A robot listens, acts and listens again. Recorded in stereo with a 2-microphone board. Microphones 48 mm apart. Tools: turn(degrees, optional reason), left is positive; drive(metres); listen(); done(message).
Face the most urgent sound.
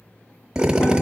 listen()
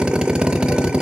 listen()
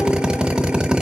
done("I can't make out anything urgent to turn to.")